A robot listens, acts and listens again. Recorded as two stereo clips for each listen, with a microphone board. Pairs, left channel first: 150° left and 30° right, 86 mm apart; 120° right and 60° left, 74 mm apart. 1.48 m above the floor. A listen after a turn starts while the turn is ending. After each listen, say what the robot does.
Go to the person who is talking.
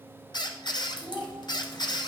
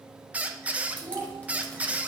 Turn 75° left.
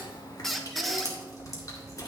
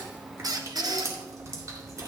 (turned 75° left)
Keep listening.
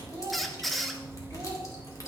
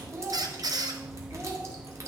Drive 1.0 m forward.
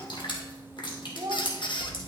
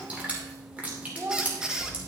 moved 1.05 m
Turn 10° left.
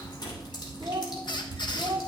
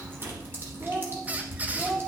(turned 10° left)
Drive 1.0 m forward.
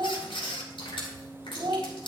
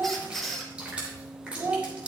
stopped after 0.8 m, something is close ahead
Arrived at the child speaking, straight ahead.